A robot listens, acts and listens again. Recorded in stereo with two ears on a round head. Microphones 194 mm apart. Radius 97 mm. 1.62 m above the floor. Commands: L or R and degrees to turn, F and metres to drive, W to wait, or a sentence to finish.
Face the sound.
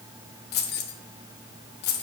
L50
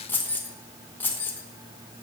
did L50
L10
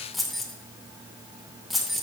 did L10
Facing the keys jangling.